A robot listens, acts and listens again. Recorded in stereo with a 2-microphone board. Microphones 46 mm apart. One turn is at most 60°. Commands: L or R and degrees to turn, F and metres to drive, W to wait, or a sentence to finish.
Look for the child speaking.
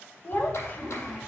L40
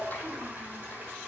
R15
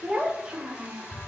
R25
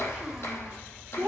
R30
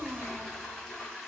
W
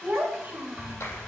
R25
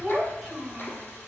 Facing the child speaking.